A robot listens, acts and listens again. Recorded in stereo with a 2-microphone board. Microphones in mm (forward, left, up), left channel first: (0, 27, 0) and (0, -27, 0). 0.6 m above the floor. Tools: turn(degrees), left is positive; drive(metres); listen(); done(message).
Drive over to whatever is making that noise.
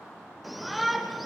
turn(degrees=30)
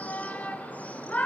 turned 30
turn(degrees=150)
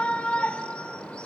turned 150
turn(degrees=20)
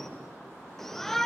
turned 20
drive(metres=1.0)
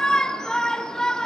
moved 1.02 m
turn(degrees=15)
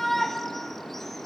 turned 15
drive(metres=1.0)
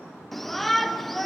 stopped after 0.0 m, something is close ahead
done("Arrived at the shout, straight ahead.")